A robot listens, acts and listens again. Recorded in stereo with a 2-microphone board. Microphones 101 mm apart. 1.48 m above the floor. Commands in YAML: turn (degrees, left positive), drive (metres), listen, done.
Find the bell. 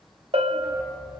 turn: -70
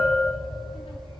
done: "Facing the bell."